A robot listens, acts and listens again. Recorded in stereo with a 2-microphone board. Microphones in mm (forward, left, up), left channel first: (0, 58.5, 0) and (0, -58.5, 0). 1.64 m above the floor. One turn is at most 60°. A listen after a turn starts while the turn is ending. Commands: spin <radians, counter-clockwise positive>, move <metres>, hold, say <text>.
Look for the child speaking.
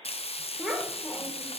spin 0.52
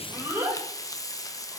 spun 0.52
spin -0.35
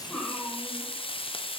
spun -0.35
spin 0.17
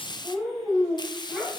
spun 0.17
say Found it: a child speaking, straight ahead, over 4 m away.